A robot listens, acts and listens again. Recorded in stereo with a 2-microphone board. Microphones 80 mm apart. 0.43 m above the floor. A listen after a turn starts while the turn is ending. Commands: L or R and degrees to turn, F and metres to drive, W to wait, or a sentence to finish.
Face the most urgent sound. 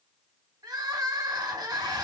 R60
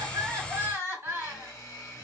R40
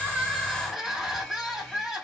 Facing the crying, 2 to 4 m away.